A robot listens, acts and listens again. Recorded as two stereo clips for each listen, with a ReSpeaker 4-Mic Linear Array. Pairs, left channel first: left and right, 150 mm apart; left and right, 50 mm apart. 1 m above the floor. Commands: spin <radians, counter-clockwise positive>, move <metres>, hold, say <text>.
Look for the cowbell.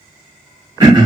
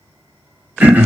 hold
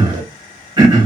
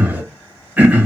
hold
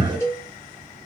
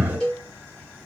spin 0.26
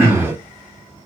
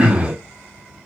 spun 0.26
hold
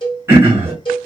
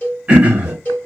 spin 2.62
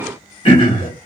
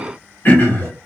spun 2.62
hold
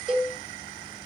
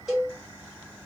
say Found it: a cowbell, straight ahead, 1 to 2 m away.